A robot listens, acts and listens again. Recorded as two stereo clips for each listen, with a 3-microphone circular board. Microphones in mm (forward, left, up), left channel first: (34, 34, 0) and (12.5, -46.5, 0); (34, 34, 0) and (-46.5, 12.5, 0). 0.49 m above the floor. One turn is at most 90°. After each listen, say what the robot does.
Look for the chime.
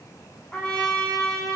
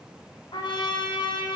Keep listening.
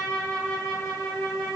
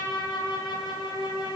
Keep listening.
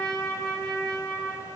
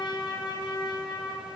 I can't make out a chime to turn to.